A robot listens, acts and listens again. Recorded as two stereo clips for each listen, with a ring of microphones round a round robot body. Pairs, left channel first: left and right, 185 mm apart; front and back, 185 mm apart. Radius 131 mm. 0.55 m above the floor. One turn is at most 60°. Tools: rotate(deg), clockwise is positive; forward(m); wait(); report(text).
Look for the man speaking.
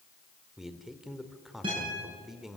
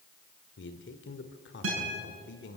report("Facing the man speaking, 1 to 2 m away.")